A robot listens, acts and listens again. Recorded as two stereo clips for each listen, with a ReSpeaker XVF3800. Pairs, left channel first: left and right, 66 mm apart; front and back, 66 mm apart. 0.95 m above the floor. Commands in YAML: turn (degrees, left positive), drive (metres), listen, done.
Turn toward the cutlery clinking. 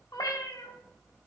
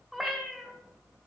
listen: true
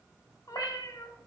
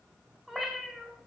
listen: true
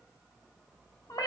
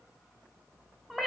done: "I can't make out cutlery clinking to turn to."